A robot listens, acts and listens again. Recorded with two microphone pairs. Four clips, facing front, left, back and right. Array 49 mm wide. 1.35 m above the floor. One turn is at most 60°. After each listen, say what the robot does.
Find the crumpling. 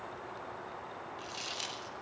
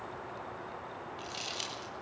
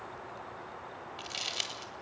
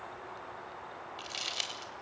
Turn 60° right.
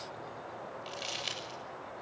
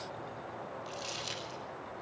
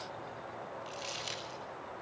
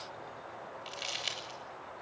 Turn 60° right.
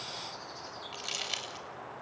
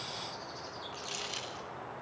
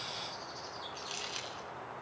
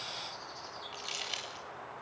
Turn 10° right.
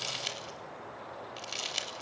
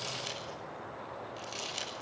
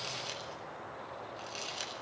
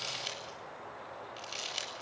Found it: crumpling, straight ahead, over 4 m away.